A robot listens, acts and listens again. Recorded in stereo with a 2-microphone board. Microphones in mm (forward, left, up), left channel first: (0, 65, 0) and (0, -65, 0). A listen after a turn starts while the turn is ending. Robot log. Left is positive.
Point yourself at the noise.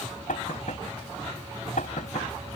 cmd yaw +90
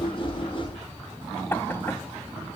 note: So it is at 15° left.
cmd yaw +15
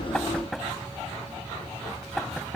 end: Found it: knocking, straight ahead.